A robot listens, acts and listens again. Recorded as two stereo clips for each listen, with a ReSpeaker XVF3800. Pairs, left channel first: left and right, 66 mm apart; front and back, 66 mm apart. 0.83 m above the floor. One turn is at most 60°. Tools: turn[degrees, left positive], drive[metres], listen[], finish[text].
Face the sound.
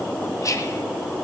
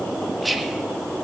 Thought: The whispering: 90° left.
Action: turn[60]
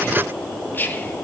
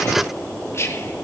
Thought: The whispering is now 35° left.
Action: turn[35]
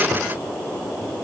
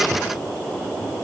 Action: listen[]
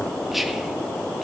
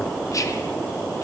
Action: finish[Found it: whispering, straight ahead.]